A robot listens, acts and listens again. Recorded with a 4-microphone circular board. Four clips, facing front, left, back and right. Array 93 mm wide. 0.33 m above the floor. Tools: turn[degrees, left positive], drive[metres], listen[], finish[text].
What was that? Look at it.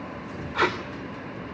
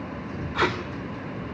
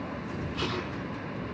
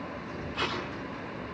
Thought: The tape being pulled: 45° left.
Action: turn[45]
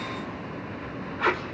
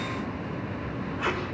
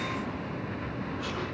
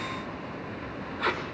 Action: finish[Found it: tape being pulled, straight ahead, over 4 m away.]